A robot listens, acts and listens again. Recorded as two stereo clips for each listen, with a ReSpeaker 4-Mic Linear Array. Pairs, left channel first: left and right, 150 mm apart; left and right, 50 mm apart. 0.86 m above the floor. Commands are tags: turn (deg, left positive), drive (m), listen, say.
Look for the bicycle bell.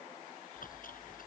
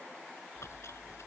<listen/>
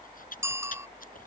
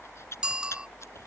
<turn deg="-15"/>
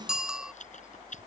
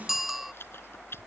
<say>Found it: a bicycle bell, straight ahead.</say>